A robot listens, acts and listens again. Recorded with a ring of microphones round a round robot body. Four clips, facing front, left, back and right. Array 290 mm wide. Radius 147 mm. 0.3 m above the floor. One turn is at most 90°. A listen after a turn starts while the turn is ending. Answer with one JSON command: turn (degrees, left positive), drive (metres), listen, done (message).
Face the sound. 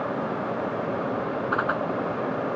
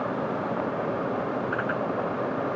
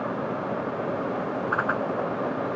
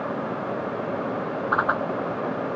{"turn": -90}
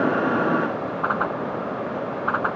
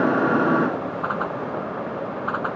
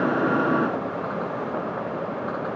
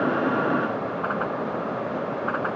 {"turn": 15}
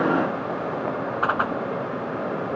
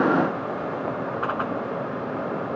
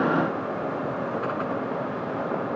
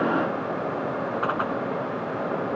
{"done": "Facing the whoosh."}